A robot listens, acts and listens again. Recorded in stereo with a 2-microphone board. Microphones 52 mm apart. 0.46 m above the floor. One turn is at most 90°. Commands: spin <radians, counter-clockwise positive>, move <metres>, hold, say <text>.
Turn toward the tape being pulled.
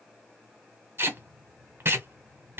spin -0.87
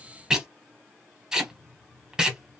spin -0.26
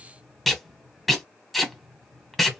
say Found it: tape being pulled, straight ahead, under 1 m away.